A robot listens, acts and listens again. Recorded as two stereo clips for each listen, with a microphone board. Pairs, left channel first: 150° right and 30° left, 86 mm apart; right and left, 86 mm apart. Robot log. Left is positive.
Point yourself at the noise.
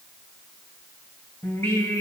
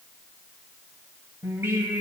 note: The singing: 150° left.
cmd yaw +150
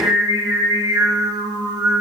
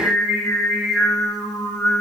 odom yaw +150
end: Facing the singing, 2 to 4 m away.